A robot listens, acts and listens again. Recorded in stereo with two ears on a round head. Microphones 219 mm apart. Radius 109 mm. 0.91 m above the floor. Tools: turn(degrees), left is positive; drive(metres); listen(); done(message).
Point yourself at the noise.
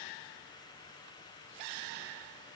listen()
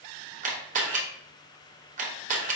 turn(degrees=-30)
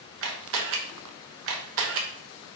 turn(degrees=-120)
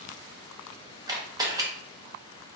turn(degrees=-15)
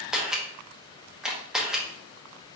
done("Facing the camera shutter, under 1 m away.")